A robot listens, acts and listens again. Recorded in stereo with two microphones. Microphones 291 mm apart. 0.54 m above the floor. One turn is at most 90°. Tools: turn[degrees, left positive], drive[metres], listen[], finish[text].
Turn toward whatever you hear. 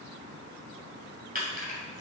Thought: The keys jangling: about 30° right or 150° right.
Action: turn[-30]
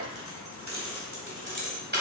Thought: The keys jangling: about 35° right or 145° right.
Action: turn[-35]
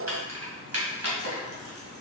Thought: So it is at 125° right.
Action: turn[-90]
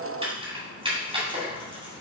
Thought: The keys jangling is now 20° right.
Action: turn[-20]
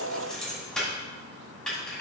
Action: finish[Facing the keys jangling.]